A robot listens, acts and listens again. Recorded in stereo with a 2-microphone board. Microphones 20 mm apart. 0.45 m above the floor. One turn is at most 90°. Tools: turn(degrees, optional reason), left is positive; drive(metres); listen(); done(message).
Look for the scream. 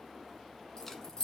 listen()
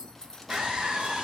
turn(degrees=-55, reason="The scream: about 55° right or 125° right.")
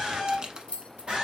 turn(degrees=-55, reason="So it is at 55° right.")
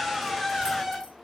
done("Facing the scream, 2 to 4 m away.")